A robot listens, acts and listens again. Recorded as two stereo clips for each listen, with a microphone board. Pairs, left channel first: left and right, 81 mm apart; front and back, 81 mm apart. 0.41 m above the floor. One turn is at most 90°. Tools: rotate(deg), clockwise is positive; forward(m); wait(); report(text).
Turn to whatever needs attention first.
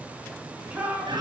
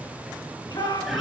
rotate(20)
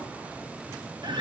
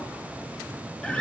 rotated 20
wait()
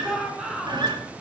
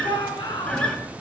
report("Facing the shout.")